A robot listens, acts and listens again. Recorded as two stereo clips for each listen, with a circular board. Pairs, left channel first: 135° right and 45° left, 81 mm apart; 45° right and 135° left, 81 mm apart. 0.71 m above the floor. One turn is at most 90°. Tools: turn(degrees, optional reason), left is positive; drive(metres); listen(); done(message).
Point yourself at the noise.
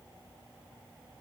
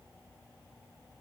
listen()
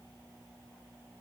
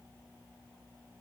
listen()
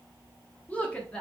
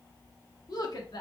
turn(degrees=-60, reason="The woman speaking: 60° right.")
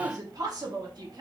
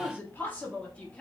turn(degrees=30, reason="The woman speaking is now 30° left.")
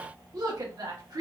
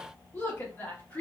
turn(degrees=20, reason="The woman speaking is now 20° left.")
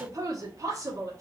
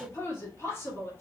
done("Facing the woman speaking.")